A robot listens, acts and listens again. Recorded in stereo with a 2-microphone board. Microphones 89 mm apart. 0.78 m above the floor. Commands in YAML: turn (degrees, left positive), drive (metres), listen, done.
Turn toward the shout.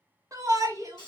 turn: -40
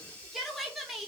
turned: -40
done: "Facing the shout, under 1 m away."